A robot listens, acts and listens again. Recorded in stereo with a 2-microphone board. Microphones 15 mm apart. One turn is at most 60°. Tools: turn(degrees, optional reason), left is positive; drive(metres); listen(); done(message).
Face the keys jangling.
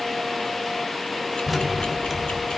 turn(degrees=30)
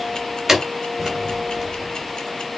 turn(degrees=-15, reason="So it is at 15° right.")
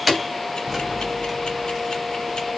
done("Found it: keys jangling, straight ahead, 2 to 4 m away.")